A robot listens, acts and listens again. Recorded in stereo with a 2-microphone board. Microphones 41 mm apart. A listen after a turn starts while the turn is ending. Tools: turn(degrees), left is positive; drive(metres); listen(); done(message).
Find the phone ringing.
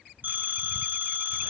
turn(degrees=-45)
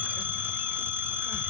turn(degrees=-90)
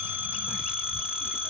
turn(degrees=-30)
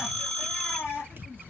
done("Found it: a phone ringing, straight ahead.")